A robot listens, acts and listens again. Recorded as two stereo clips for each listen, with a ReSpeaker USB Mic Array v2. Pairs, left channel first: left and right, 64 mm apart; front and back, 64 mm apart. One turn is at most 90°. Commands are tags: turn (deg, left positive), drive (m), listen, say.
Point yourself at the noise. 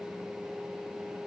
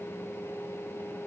<listen/>
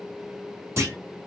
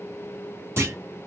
<turn deg="-90"/>
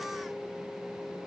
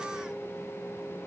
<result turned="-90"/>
<turn deg="-45"/>
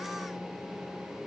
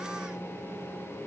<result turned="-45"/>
<say>Facing where the clunk came from. I can't hear it now.</say>